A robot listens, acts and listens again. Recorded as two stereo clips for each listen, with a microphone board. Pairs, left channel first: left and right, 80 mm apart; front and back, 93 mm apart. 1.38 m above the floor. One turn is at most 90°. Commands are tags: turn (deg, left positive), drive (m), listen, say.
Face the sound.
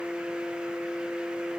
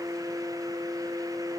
<listen/>
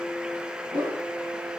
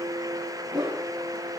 <turn deg="-90"/>
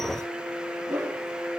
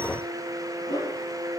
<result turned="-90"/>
<turn deg="-40"/>
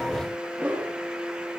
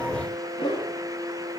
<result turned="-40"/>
<turn deg="-10"/>
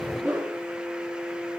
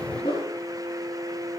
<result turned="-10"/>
<say>Facing the whoosh.</say>